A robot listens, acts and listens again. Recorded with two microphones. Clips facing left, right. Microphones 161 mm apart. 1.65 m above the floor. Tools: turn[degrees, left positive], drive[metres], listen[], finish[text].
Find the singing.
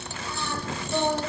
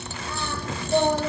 Thought: The singing: about 55° right or 125° right.
Action: turn[-55]
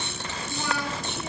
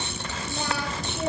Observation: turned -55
Thought: So it is at 70° right.
Action: turn[-70]
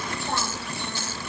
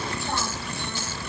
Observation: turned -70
Action: listen[]
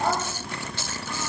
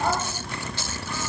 Action: listen[]
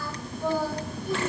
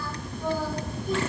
Thought: The singing is now 10° left.
Action: turn[10]
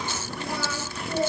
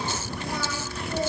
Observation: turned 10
Action: finish[Found it: singing, straight ahead, over 4 m away.]